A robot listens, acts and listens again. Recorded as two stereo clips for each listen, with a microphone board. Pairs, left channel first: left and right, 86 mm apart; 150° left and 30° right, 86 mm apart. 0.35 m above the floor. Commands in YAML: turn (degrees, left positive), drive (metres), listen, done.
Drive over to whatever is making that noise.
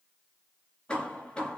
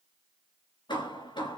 turn: 165
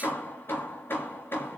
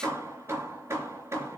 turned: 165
turn: 25
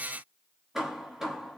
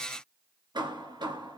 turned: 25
drive: 1.0
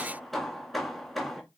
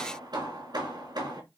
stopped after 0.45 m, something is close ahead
done: "Blocked. The hammering is further on, straight ahead."